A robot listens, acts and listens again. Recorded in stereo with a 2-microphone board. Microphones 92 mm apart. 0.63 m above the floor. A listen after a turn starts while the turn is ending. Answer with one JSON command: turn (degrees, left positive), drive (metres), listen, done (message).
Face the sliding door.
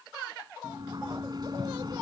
{"turn": -50}
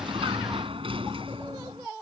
{"turn": -80}
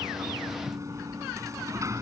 {"turn": -35}
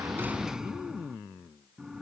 {"done": "Found it: a sliding door, straight ahead."}